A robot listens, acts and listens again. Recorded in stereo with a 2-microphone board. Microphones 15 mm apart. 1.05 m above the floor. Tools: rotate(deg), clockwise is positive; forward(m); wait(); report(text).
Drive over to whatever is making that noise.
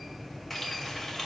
rotate(-30)
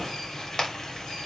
rotate(-135)
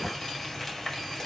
rotate(-30)
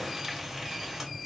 rotate(20)
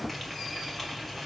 forward(1.0)
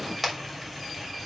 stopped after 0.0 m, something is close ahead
report("Blocked. The frying is further on, straight ahead.")